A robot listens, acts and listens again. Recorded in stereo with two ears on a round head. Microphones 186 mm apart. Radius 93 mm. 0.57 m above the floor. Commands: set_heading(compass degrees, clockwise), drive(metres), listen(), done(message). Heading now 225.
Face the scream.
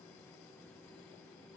listen()
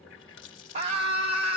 set_heading(255)
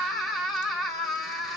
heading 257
done("Facing the scream, 2 to 4 m away.")